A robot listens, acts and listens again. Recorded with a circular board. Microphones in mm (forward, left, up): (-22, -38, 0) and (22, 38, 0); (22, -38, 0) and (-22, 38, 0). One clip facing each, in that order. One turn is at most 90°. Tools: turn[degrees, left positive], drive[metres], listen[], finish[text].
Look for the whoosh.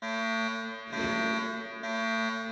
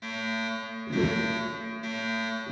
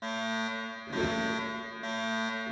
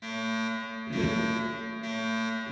Thought: The whoosh: 15° left.
Action: turn[15]
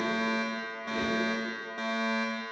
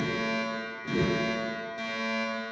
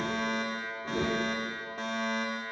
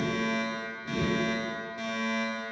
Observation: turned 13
Action: finish[Facing the whoosh.]